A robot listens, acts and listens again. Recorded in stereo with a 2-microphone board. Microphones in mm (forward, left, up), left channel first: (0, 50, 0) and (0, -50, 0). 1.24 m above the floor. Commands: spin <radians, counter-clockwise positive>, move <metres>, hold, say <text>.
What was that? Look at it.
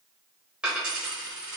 spin -0.52
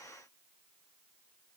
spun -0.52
hold
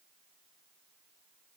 say I heard a dropped coin, but can't make it out now. It was about 20° left or 140° right.